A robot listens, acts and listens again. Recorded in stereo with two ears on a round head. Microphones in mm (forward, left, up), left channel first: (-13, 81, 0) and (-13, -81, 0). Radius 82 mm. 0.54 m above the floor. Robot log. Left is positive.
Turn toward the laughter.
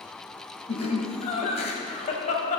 note: The laughter: about 45° left or 135° left.
cmd yaw +45
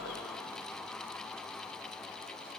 cmd idle
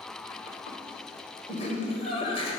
note: So it is at 35° left.
cmd yaw +35
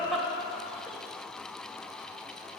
end: Found it: laughter, straight ahead, 2 to 4 m away.